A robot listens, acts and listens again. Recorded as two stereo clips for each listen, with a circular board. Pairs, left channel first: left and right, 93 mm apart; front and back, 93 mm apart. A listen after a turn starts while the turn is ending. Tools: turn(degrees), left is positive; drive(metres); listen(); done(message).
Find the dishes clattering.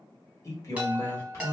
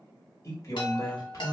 listen()
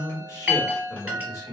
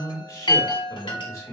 listen()
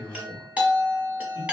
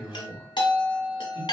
done("I can't make out dishes clattering to turn to.")